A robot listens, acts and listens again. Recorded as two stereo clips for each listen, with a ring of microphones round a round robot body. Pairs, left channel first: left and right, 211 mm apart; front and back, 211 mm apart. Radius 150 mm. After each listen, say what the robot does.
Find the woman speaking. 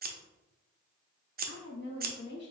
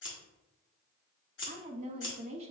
Turn 125° left.
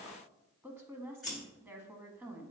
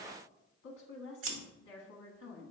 Turn 10° right.
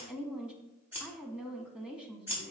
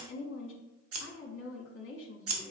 Facing the woman speaking.